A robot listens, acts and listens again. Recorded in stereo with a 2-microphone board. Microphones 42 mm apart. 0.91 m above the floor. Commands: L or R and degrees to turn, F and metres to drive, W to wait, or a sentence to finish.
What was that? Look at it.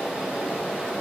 W
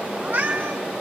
R50
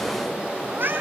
R60
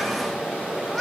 Found it: a cat meowing, straight ahead, 2 to 4 m away.